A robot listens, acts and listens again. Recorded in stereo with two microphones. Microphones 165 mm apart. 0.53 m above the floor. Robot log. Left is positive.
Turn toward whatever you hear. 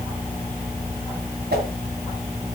cmd yaw -90
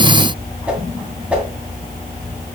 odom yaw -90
end: Facing the whoosh.